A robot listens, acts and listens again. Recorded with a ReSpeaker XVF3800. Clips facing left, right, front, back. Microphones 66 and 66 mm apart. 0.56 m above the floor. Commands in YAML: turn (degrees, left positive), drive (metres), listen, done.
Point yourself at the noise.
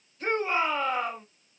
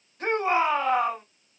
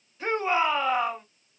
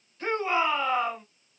turn: -70
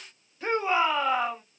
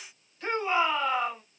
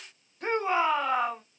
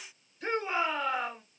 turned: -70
turn: 20
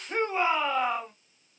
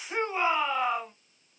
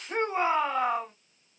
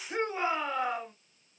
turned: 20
done: "Facing the shout, 2 to 4 m away."